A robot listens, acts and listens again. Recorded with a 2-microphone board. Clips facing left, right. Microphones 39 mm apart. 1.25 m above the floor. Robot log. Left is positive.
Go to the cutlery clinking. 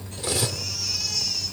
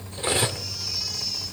note: The cutlery clinking: about 35° right or 145° right.
cmd yaw -35
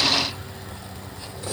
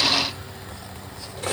note: So it is at 110° right.
cmd yaw -110
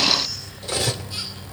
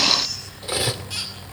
note: The cutlery clinking is now 15° right.
cmd yaw -15
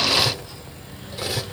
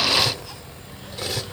cmd fwd 1.0
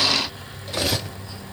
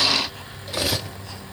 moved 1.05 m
cmd fwd 1.0
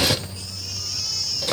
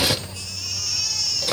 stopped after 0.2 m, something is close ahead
end: Arrived at the cutlery clinking, straight ahead.